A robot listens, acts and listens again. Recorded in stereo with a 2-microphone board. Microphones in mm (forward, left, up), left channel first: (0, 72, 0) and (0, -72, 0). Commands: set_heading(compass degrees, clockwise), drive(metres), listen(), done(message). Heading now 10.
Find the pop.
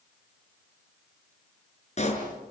set_heading(320)
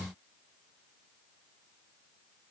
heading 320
listen()
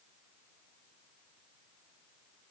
done("I heard a pop, but can't make it out now. It was about straight ahead or 80° left.")